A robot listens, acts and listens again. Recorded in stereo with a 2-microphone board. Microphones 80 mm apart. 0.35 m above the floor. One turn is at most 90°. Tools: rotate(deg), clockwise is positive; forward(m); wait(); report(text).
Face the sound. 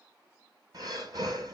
rotate(55)
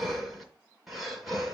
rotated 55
report("Facing the breathing, 1 to 2 m away.")